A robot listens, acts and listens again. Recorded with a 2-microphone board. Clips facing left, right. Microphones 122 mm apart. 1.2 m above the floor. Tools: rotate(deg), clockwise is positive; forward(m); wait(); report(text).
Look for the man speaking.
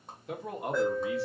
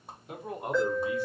rotate(-75)
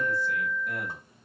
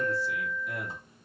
rotate(-50)
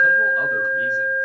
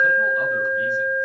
wait()
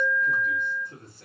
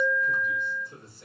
rotate(-50)
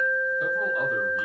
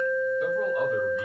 wait()
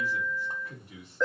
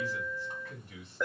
rotate(-15)
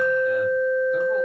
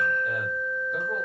wait()
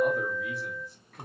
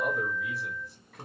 report("Facing the man speaking, 2 to 4 m away.")